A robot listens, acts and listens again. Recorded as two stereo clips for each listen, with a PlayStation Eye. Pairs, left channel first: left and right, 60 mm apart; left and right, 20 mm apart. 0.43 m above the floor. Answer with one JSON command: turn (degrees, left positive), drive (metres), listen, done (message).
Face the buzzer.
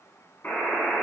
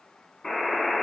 {"turn": 35}
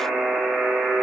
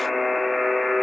{"done": "Facing the buzzer."}